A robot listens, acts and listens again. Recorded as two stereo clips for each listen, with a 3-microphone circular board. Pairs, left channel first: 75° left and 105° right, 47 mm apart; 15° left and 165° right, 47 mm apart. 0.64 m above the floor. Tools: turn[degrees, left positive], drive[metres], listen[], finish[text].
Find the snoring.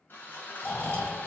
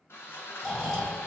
Thought: The snoring: 100° left.
Action: turn[100]
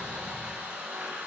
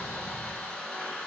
Thought: The snoring is now 10° left.
Action: turn[10]
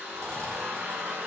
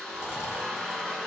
Action: finish[Facing the snoring.]